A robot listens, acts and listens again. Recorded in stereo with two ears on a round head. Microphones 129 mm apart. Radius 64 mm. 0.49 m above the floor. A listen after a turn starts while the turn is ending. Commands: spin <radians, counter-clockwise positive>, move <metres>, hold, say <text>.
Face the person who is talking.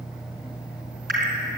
hold
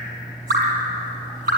hold
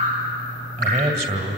spin -0.87
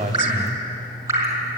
hold
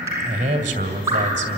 spin -1.31
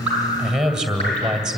say Found it: a man speaking, straight ahead, 2 to 4 m away.